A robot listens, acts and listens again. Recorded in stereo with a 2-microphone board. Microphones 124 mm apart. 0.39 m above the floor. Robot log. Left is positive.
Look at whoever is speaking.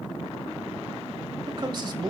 note: The man speaking: about 40° right or 140° right.
cmd yaw -40
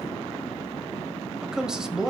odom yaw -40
end: Facing the man speaking.